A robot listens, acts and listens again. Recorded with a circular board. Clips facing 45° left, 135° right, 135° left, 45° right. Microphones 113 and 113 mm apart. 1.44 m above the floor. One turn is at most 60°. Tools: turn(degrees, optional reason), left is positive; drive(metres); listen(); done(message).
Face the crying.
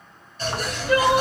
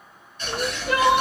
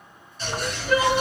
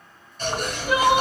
turn(degrees=-60, reason="The crying: 125° right.")
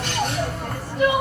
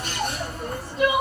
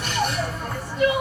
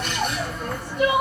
turn(degrees=-60, reason="The crying is now 70° right.")
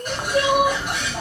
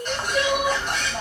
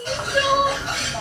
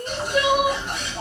turn(degrees=10, reason="The crying is now 10° left.")
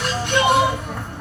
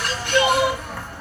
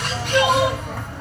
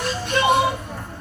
done("Facing the crying.")